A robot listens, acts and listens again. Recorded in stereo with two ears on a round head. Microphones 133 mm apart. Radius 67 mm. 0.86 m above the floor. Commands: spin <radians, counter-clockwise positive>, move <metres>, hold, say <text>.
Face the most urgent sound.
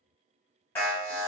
spin 0.52
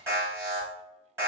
spin -0.35
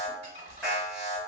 say Facing the alarm.